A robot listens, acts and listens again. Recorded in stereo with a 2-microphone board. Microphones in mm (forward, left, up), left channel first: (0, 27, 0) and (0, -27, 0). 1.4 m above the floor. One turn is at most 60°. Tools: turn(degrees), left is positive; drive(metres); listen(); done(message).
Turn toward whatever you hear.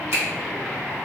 turn(degrees=-50)
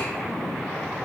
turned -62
listen()
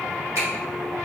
turn(degrees=-60)
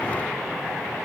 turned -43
turn(degrees=-25)
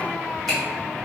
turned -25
listen()
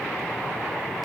done("I heard a finger snap from this way, but can't make it out now.")